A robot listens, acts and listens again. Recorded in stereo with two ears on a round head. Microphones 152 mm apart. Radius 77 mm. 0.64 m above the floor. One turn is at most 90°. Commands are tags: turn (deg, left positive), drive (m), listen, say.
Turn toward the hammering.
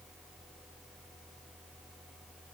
<listen/>
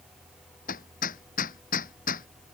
<turn deg="50"/>
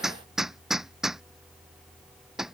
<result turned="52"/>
<say>Found it: hammering, straight ahead.</say>